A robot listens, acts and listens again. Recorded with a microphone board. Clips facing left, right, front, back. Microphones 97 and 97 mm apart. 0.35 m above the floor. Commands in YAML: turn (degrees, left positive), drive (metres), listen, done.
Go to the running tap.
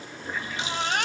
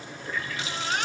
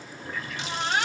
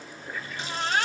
turn: 25
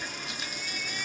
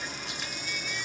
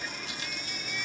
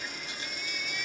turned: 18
listen: true
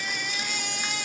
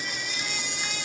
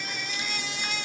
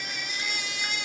listen: true
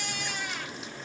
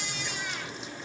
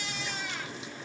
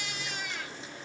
done: "Facing where the running tap came from. I can't hear it now. I did not reach it."